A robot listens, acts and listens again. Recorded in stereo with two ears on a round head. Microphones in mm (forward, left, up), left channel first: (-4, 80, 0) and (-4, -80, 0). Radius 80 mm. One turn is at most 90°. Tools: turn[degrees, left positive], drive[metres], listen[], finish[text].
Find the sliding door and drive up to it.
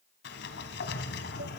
Thought: The sliding door: about 65° left or 115° left.
Action: turn[65]
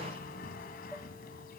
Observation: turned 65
Thought: So it is at 50° left.
Action: turn[50]
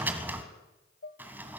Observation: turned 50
Thought: The sliding door is now 10° right.
Action: turn[-10]
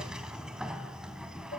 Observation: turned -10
Action: drive[1.0]
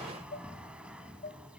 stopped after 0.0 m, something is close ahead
Action: finish[Something is in my way. I am facing the sliding door but have not reached it.]